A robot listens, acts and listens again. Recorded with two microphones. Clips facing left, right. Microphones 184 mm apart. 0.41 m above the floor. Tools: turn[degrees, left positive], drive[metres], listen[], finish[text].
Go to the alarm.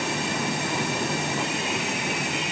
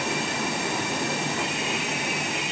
Action: listen[]
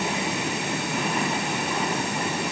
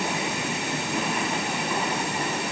Action: listen[]
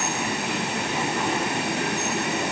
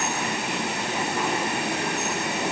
Action: finish[I can't make out an alarm to turn to.]